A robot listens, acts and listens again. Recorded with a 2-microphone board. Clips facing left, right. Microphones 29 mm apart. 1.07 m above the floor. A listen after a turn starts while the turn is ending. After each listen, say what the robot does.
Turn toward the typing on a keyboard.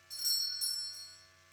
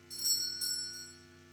Keep listening.
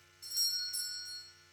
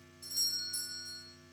Keep listening.
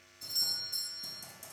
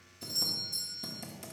Turn 50° right.
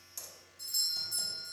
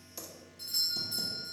Keep listening.
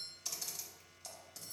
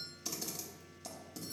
Facing the typing on a keyboard, 1 to 2 m away.